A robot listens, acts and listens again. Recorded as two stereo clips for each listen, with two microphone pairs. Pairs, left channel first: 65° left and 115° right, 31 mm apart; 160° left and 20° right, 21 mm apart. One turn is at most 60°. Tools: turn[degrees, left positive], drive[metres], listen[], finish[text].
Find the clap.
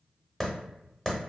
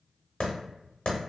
Thought: The clap: 145° left.
Action: turn[60]
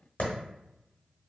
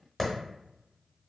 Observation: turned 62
Thought: The clap is now 80° left.
Action: turn[60]
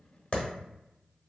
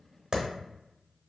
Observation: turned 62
Thought: The clap is now 20° left.
Action: turn[20]
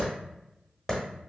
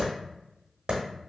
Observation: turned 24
Action: finish[Facing the clap.]